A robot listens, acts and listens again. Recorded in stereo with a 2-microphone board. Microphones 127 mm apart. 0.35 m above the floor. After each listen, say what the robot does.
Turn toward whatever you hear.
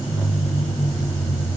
Keep listening.
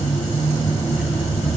Keep listening.
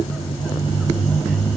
I can't make out anything to turn to.